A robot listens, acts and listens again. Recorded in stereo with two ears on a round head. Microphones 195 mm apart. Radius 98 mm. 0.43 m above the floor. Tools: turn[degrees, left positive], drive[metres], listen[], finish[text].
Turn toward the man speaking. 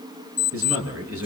Thought: The man speaking: about 65° right or 115° right.
Action: turn[-65]
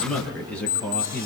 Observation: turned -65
Thought: So it is at 10° left.
Action: turn[10]
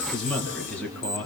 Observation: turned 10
Action: finish[Found it: a man speaking, straight ahead.]